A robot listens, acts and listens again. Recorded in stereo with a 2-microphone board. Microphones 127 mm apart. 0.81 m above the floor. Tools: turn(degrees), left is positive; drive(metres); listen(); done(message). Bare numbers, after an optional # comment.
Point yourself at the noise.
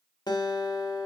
# The guitar: about 35° left or 145° left.
turn(35)
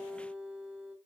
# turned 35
done("Facing the guitar.")